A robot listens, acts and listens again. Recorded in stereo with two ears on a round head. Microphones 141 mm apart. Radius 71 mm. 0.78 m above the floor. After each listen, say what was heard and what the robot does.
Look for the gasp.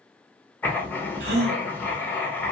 The gasp: about 75° right or 105° right. Turn 75° right.
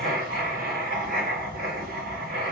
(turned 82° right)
Keep listening.
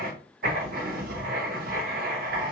I heard a gasp, but can't make it out now. It was about 10° left or 25° right.